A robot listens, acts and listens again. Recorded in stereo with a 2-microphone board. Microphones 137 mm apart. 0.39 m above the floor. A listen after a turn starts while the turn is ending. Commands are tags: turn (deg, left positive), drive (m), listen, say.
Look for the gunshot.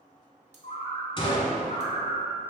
<turn deg="40"/>
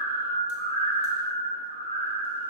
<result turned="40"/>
<listen/>
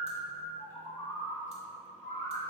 <say>I heard a gunshot, but can't make it out now. It was about straight ahead or 100° left.</say>